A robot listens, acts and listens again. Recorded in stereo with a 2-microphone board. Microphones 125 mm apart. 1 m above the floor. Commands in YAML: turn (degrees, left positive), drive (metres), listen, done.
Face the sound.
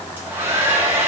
turn: -15
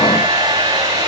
turn: -150
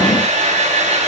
turn: -70
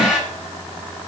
done: "Found it: a hair dryer, straight ahead, over 4 m away."